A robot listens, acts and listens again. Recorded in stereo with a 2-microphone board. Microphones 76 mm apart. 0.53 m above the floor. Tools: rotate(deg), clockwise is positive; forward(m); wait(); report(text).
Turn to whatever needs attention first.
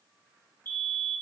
rotate(-30)
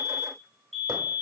report("Facing the fire alarm, 2 to 4 m away.")